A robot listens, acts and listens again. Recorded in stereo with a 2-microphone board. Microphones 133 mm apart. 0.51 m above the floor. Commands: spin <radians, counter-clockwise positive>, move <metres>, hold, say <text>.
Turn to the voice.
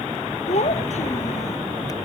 spin 1.05
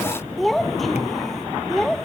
say Facing the child speaking.